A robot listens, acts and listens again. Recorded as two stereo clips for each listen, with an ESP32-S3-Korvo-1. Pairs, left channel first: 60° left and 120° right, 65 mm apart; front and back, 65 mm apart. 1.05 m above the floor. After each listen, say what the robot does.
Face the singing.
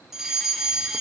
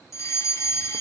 Keep listening.
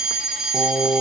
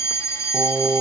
Turn 110° right.
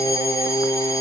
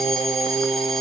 Turn 25° left.
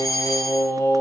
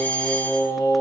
Turn 10° left.
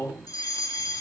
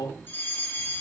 Found it: singing, straight ahead.